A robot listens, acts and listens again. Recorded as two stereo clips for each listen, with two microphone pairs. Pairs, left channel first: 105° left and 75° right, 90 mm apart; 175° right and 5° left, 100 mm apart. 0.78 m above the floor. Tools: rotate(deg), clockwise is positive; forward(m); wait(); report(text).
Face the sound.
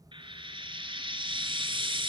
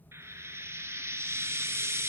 rotate(55)
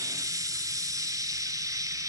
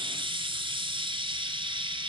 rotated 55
rotate(25)
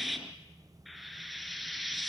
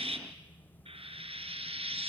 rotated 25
rotate(-15)
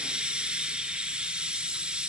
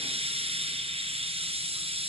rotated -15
report("Facing the frying.")